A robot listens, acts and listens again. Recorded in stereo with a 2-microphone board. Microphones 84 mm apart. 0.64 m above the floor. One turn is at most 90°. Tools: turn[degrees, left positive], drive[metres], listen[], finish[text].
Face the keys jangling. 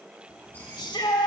Thought: The keys jangling: about 20° left or 160° left.
Action: turn[20]
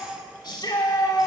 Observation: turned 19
Action: listen[]
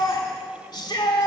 Action: listen[]
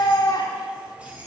Thought: So it is at 15° right.
Action: turn[-15]
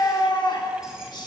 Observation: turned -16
Action: listen[]
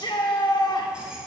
Action: listen[]
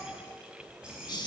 Thought: The keys jangling is now 10° right.
Action: turn[-10]
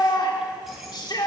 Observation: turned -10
Action: listen[]
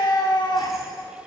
Action: listen[]
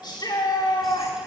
Action: finish[I heard keys jangling from this way, but can't make it out now.]